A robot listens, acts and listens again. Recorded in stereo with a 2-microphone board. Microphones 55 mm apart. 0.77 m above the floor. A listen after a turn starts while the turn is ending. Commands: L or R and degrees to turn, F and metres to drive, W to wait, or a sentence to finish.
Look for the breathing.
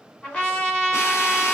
W
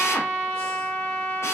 W
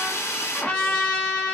I can't make out breathing, only a drill and a trumpet.